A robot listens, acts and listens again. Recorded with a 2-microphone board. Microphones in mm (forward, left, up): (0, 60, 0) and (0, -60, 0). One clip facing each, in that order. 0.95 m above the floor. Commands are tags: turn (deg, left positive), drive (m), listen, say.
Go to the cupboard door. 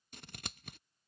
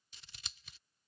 <listen/>
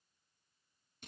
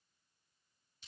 <listen/>
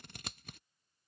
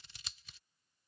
<say>I can't make out a cupboard door to turn to.</say>